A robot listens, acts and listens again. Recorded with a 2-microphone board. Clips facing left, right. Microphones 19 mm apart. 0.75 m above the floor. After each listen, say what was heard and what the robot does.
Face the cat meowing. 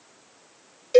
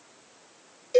Keep listening.
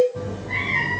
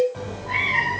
Turn 90° right.
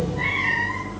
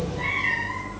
So it is at 20° left. Turn 20° left.
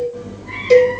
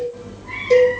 Facing the cat meowing, 2 to 4 m away.